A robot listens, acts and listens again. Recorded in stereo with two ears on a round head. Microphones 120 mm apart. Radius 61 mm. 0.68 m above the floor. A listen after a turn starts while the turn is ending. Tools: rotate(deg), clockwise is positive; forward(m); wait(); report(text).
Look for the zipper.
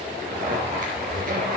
rotate(70)
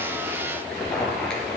report("Found it: a zipper, straight ahead, 2 to 4 m away.")